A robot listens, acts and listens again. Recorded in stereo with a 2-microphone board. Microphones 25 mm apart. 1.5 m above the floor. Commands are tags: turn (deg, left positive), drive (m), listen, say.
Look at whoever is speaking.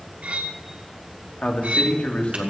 <turn deg="60"/>
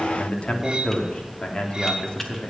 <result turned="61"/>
<turn deg="35"/>
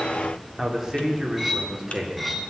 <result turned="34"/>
<turn deg="-10"/>
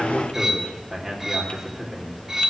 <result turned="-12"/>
<say>Facing the man speaking.</say>